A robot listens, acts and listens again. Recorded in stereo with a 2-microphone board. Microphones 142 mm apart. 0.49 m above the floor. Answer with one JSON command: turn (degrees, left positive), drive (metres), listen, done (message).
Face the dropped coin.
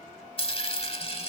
{"turn": 40}
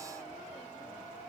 {"listen": true}
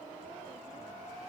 {"done": "I heard a dropped coin, but can't make it out now. It was about straight ahead or 100° left."}